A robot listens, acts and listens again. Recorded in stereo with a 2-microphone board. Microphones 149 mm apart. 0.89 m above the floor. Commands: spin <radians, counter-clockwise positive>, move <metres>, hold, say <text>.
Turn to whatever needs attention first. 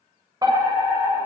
spin -0.44
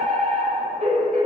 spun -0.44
spin -2.18
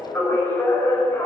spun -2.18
spin 0.26
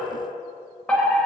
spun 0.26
say Facing the fire alarm, over 4 m away.